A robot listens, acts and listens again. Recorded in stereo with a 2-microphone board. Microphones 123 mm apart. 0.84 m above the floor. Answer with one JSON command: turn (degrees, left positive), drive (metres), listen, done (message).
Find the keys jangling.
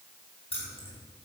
{"turn": 50}
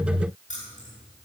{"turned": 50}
{"turn": 80}
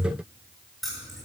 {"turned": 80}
{"done": "Found it: keys jangling, straight ahead, over 4 m away."}